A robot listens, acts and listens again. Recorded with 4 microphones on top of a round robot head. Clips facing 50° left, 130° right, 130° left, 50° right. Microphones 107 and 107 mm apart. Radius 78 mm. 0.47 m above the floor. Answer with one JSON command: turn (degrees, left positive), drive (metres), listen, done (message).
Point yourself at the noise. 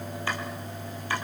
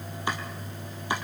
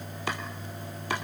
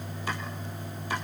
{"turn": 155}
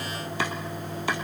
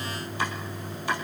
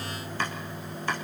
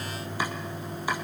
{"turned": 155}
{"turn": 30}
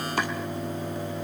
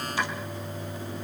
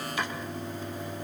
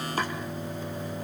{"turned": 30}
{"done": "Facing the chopping, 2 to 4 m away."}